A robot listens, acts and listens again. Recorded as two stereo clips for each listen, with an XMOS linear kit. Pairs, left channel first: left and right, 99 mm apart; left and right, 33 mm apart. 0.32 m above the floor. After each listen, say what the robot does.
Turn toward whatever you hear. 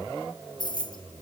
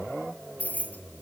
Turn 50° left.
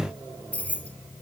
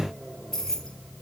Turn 15° left.
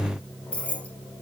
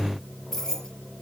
Turn 15° left.
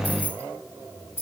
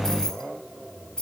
Turn 25° left.
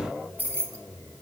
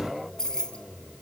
Turn 20° left.
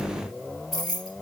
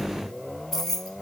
Found it: keys jangling, straight ahead, 2 to 4 m away.